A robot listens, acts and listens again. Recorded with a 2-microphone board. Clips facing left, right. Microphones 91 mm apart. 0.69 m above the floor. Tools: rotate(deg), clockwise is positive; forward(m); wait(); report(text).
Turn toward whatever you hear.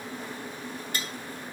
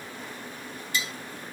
rotate(-50)
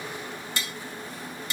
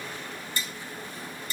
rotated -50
rotate(-85)
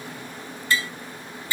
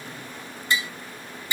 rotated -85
rotate(20)
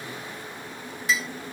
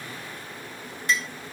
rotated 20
report("Found it: tapping, straight ahead.")